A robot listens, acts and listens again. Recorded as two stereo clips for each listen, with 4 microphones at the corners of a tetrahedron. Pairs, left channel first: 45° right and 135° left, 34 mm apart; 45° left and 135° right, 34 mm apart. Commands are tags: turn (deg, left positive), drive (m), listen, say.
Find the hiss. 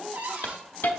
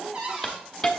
<turn deg="-30"/>
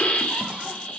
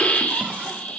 <say>Facing the hiss.</say>